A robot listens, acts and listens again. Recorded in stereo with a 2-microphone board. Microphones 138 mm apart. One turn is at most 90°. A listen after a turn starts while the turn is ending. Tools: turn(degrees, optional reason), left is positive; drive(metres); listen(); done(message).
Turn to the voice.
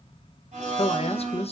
turn(degrees=45, reason="The man speaking: about 45° left or 135° left.")
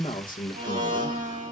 turn(degrees=85, reason="So it is at 85° left.")
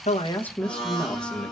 turn(degrees=10, reason="The man speaking is now 10° left.")
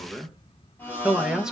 done("Facing the man speaking.")